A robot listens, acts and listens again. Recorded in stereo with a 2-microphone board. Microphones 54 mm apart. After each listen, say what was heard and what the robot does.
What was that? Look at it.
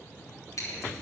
Turn 90° left.
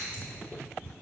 So it is at 15° right. Turn 15° right.
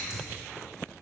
Found it: scissors, straight ahead.